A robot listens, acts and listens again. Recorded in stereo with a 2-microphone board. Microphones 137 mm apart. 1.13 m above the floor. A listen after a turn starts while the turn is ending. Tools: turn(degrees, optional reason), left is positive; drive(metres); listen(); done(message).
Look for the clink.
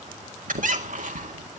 listen()
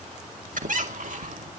listen()
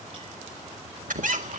done("I can't make out a clink to turn to.")